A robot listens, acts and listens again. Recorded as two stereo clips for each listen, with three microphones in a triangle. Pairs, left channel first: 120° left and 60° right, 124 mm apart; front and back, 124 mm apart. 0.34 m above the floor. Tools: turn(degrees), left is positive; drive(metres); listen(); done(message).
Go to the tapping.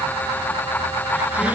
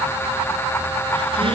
listen()
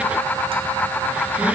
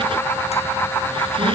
listen()
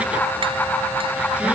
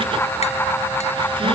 done("I can't make out tapping to turn to.")